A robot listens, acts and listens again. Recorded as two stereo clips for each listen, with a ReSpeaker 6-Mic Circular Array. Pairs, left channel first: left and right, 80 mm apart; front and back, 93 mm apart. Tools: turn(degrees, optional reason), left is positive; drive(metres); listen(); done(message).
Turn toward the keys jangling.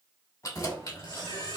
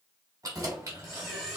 turn(degrees=125, reason="The keys jangling: 125° left.")
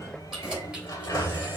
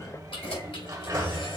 turn(degrees=-10, reason="The keys jangling is now 10° right.")
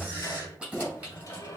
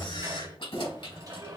turn(degrees=-15, reason="The keys jangling is now 15° right.")
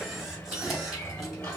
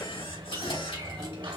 done("Facing the keys jangling.")